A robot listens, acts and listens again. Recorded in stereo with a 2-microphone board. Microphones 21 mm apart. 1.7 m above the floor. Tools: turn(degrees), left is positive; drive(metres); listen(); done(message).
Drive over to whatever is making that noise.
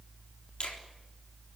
turn(degrees=50)
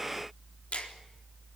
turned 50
turn(degrees=80)
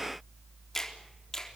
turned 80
turn(degrees=20)
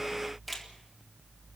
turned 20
drive(metres=1.0)
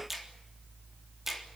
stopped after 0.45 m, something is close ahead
turn(degrees=-10)
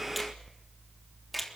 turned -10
done("Blocked. The finger snap is further on, straight ahead.")